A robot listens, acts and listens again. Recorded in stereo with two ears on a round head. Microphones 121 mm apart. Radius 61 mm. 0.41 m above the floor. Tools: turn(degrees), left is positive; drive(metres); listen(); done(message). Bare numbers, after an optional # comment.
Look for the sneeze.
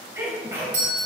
# The sneeze: about 20° right or 160° right.
turn(-20)
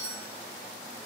listen()
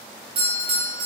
done("I heard a sneeze, but can't make it out now. It was about straight ahead or 140° right.")